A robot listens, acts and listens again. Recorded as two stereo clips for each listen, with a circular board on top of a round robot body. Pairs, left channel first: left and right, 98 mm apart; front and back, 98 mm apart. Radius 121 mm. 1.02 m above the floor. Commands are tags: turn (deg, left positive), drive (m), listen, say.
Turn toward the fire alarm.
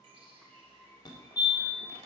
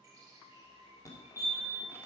<turn deg="50"/>
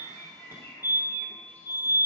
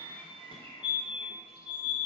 <turn deg="-25"/>
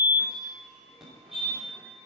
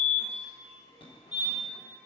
<say>Facing the fire alarm.</say>